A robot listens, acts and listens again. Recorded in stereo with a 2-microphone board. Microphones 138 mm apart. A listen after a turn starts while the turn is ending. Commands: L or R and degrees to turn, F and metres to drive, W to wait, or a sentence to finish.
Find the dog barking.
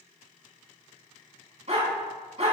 R50
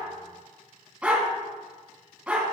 R10
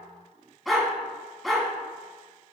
Facing the dog barking, 2 to 4 m away.